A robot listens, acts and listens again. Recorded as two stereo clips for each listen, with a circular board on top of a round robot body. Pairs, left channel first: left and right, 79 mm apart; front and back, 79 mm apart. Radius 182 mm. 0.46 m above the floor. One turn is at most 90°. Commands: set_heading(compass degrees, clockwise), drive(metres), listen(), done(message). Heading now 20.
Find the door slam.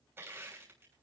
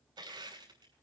listen()
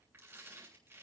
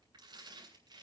listen()
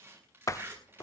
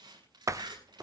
set_heading(290)
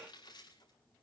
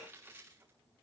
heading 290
set_heading(245)
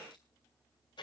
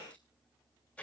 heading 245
done("I heard a door slam from this way, but can't make it out now.")